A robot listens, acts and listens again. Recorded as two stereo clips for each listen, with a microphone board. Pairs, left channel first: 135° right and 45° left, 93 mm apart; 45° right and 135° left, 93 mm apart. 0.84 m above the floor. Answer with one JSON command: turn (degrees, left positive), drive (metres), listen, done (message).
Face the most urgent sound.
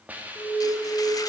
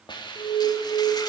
{"turn": -55}
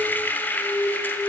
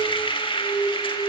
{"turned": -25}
{"turn": -35}
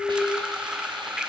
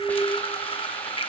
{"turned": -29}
{"done": "Found it: an alarm, straight ahead, 2 to 4 m away."}